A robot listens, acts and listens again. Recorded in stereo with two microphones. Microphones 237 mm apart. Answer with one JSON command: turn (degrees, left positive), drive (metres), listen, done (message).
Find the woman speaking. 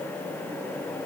{"listen": true}
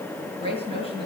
{"turn": 25}
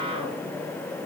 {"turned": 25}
{"listen": true}
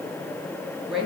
{"done": "Facing the woman speaking, over 4 m away."}